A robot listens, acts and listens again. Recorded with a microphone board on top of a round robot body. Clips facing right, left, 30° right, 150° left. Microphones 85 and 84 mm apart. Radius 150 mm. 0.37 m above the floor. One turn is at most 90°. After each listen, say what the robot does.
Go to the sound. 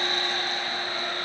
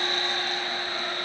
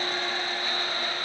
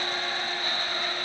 Keep listening.
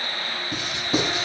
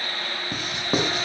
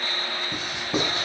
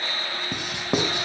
Turn 90° left.
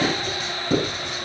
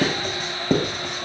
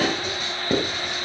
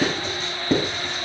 Turn 50° left.
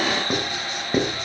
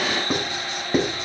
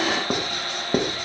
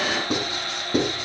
Drive 1.0 m forward.
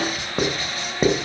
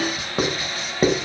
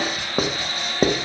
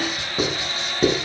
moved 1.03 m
Drive 1.0 m forward.
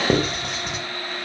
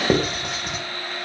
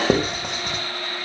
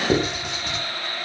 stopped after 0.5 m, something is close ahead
Blocked. The writing is further on, straight ahead.